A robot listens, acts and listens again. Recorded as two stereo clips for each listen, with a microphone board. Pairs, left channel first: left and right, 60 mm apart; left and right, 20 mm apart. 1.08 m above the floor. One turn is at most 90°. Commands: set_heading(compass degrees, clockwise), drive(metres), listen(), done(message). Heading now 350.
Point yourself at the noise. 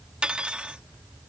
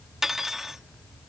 set_heading(10)
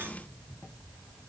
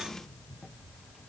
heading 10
set_heading(100)
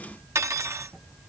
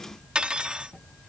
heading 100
set_heading(155)
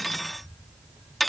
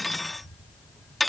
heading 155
done("Facing the cutlery clinking.")